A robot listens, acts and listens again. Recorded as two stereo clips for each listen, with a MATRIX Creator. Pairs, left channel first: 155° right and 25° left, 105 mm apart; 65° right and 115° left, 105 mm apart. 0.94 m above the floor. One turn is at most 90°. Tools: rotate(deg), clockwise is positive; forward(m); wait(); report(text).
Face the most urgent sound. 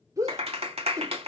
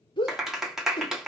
rotate(35)
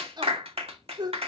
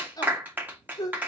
rotate(20)
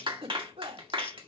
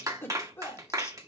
report("Facing the shout, 2 to 4 m away.")